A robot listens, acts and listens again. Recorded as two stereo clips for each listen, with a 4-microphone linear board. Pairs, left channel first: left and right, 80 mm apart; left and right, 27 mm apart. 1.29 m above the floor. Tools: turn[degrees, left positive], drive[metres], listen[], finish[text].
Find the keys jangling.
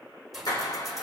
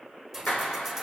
Action: turn[-30]
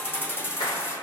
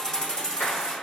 Thought: So it is at 35° left.
Action: turn[35]
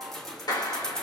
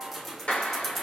Thought: The keys jangling is now 10° left.
Action: turn[10]
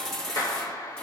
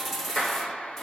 Thought: The keys jangling is now 10° left.
Action: turn[10]
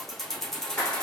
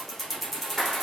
Thought: The keys jangling is now 10° left.
Action: turn[10]
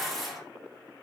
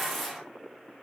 Action: finish[Found it: keys jangling, straight ahead.]